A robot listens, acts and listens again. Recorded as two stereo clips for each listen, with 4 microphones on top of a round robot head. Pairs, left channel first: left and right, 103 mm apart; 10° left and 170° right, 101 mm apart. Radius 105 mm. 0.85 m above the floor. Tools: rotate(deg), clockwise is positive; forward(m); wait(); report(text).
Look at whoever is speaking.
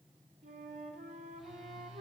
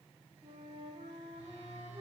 wait()
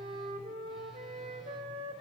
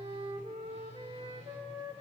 wait()
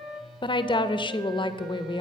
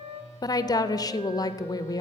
rotate(-55)
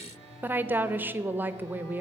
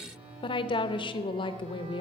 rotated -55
rotate(20)
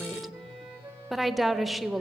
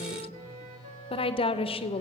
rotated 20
report("Facing the woman speaking.")